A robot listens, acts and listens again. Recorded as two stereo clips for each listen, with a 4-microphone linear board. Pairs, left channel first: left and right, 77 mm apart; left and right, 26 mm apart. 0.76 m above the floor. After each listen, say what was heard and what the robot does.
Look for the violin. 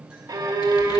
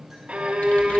The violin: about 65° right or 115° right. Turn 65° right.
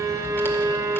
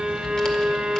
So it is at 50° right. Turn 50° right.
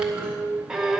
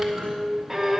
Found it: a violin, straight ahead.